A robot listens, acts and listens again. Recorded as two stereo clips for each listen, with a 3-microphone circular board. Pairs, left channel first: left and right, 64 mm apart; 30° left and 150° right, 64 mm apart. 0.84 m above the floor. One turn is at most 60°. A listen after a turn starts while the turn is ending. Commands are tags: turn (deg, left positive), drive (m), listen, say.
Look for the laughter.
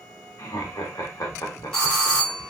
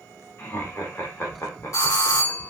<turn deg="60"/>
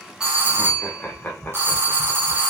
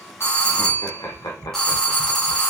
<turn deg="25"/>
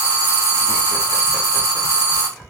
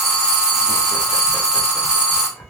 <listen/>
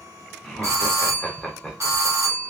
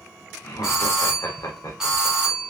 <say>Found it: laughter, straight ahead.</say>